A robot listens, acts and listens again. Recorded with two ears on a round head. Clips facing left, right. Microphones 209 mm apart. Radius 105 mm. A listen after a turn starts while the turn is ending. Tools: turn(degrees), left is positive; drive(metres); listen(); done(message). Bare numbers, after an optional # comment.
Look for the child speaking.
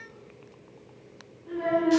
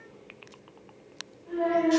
# The child speaking: about 40° left or 140° left.
turn(40)
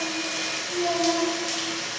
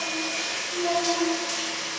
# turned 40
# So it is at 90° left.
turn(90)
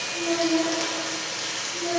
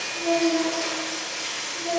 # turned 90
# The child speaking is now 20° left.
turn(20)
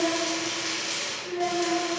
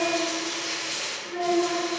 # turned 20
done("Found it: a child speaking, straight ahead, 1 to 2 m away.")